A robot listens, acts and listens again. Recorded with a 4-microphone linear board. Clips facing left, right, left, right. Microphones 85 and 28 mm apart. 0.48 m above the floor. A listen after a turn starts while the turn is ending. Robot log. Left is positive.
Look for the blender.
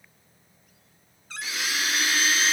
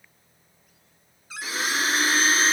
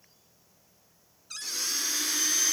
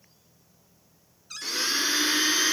note: The blender: about 35° right or 145° right.
cmd yaw -35
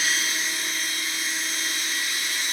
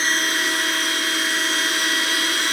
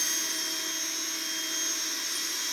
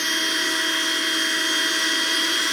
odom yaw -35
note: So it is at 105° right.
cmd yaw -105
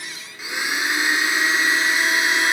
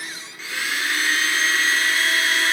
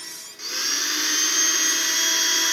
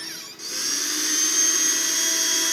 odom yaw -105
note: The blender is now 15° left.
cmd yaw +15
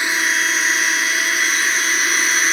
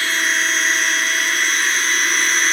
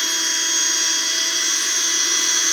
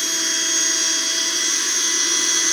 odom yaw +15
end: Facing the blender.